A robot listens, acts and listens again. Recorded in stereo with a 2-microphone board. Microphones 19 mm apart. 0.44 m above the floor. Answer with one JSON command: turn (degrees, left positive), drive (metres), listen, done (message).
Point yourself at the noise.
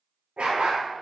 {"turn": -60}
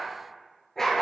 {"turn": 20}
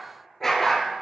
{"turn": 20}
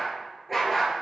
{"turn": 10}
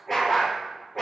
{"turn": 15}
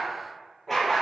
{"done": "Facing the dog barking, 2 to 4 m away."}